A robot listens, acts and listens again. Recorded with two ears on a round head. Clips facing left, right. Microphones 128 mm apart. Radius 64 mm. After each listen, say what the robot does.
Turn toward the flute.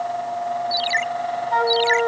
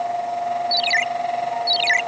Turn 90° left.
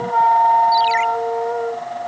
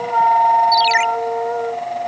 Found it: a flute, straight ahead.